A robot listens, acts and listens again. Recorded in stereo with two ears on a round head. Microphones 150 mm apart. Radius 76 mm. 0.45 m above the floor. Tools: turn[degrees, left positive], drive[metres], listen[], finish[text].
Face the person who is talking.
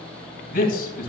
Thought: The man speaking: about 55° left or 125° left.
Action: turn[55]
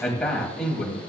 Action: finish[Found it: a man speaking, straight ahead.]